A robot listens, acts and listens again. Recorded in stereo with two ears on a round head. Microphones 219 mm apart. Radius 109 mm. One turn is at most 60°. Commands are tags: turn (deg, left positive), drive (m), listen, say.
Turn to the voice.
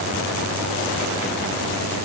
<listen/>
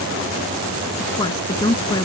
<turn deg="15"/>
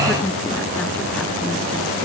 <listen/>
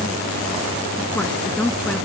<say>Facing the woman speaking.</say>